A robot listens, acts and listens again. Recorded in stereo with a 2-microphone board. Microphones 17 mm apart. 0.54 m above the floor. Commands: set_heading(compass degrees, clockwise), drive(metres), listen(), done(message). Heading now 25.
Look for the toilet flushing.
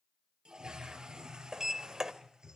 set_heading(70)
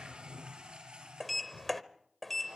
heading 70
set_heading(160)
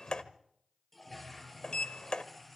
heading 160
done("Facing the toilet flushing.")